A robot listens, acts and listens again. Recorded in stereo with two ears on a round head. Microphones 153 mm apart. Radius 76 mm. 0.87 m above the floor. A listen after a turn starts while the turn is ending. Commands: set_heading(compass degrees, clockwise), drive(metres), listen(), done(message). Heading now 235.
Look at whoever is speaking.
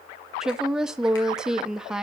set_heading(265)
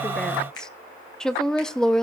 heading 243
set_heading(213)
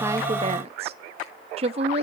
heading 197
set_heading(242)
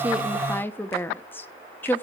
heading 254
set_heading(239)
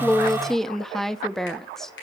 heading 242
done("Facing the woman speaking, under 1 m away.")